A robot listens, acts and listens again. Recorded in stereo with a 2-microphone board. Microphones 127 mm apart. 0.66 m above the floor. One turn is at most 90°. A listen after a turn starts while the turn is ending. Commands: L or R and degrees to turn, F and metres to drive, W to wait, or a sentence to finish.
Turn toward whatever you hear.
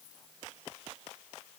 W
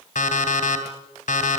L90
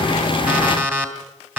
R15
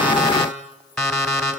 Facing the alarm clock, 2 to 4 m away.